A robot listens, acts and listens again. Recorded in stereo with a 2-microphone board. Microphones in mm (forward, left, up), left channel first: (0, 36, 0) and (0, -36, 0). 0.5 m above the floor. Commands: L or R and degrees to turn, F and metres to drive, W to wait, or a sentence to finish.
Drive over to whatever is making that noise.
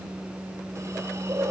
R40
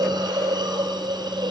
R95
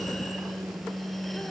W
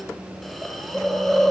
F1.0
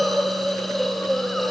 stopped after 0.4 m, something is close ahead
Blocked. The hiss is further on, straight ahead.